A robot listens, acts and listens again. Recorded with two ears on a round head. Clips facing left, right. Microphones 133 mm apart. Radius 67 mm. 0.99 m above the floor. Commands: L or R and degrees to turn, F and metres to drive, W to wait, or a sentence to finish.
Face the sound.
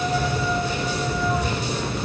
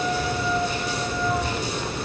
L70
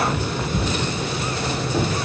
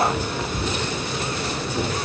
L60
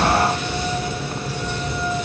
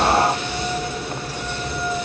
W
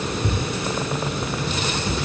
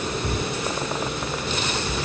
L10
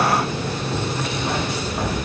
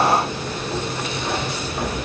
Facing the keys jangling, over 4 m away.